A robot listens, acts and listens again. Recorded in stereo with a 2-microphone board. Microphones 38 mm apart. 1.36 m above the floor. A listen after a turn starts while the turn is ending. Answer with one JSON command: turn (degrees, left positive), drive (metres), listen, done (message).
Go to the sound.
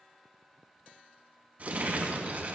{"turn": -45}
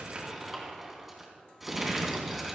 {"drive": 1.0}
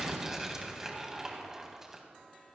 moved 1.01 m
{"turn": -15}
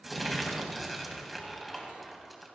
{"drive": 1.0}
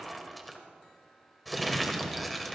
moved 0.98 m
{"drive": 1.0}
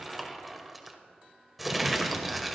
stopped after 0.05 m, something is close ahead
{"done": "Arrived at the crumpling, straight ahead."}